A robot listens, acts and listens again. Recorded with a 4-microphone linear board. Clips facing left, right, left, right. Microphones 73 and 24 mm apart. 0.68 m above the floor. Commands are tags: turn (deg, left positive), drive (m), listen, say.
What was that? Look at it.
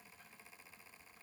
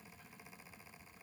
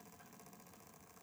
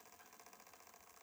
<listen/>
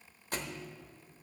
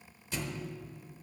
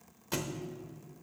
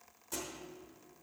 <turn deg="50"/>
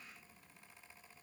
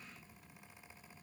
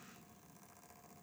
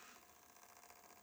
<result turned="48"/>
<listen/>
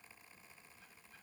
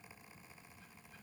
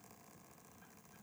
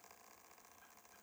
<say>I heard a thud, but can't make it out now. It was about straight ahead or 85° left.</say>